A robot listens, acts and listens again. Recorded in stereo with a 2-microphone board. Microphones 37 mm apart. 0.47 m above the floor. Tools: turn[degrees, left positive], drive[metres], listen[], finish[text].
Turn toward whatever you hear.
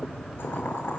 Action: turn[90]
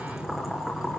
Thought: So it is at 10° right.
Action: turn[-10]
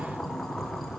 Action: finish[Found it: boiling, straight ahead, over 4 m away.]